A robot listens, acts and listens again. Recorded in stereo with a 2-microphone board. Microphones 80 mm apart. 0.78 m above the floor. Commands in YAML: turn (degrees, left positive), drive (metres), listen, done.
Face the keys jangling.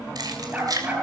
turn: -50
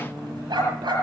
listen: true
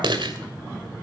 turn: -80
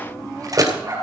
turn: -50
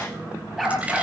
listen: true
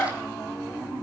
listen: true
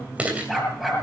turn: -15
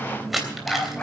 done: "Facing the keys jangling, 2 to 4 m away."